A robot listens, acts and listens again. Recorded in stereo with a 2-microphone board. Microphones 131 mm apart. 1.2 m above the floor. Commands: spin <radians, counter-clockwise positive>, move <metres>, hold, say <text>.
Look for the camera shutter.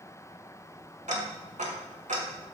hold
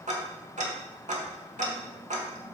hold
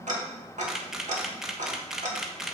spin -0.52
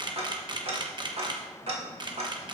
spin -2.53
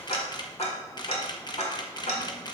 spin 0.61
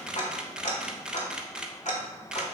say Found it: a camera shutter, straight ahead.